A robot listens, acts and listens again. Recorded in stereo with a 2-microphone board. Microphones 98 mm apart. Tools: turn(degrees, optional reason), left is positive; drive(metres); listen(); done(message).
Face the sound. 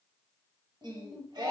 turn(degrees=-50, reason="The singing: about 50° right or 130° right.")
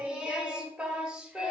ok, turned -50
turn(degrees=-10, reason="So it is at 10° right.")
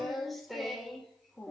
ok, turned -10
done("Facing the singing.")